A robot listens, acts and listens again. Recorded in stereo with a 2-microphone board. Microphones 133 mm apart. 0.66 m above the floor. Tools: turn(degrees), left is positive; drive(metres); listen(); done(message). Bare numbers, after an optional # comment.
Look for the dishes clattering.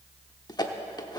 # The dishes clattering: about 35° left or 145° left.
turn(35)
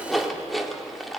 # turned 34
done("Found it: dishes clattering, straight ahead.")